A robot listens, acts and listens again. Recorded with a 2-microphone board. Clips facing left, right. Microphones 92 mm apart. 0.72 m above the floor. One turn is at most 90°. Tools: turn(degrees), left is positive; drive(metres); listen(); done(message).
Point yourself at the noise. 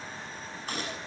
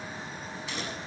turn(degrees=50)
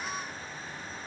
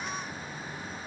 listen()
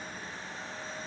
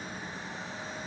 done("I heard a gunshot, but can't make it out now. It was about straight ahead or 80° left.")